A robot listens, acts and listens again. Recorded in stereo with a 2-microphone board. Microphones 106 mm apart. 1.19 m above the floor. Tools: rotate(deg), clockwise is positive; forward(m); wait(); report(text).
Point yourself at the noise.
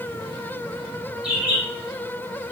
rotate(30)
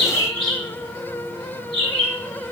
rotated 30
rotate(140)
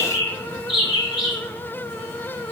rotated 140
rotate(-40)
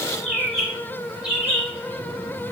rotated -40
rotate(10)
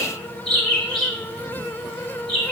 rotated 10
report("Facing the bird.")